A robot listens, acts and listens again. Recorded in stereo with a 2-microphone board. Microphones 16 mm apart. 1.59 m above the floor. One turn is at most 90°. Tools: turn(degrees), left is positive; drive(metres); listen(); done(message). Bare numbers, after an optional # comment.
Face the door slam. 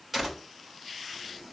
turn(-30)
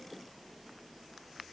listen()
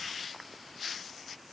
done("I heard a door slam, but can't make it out now. It was about 15° left or 135° right.")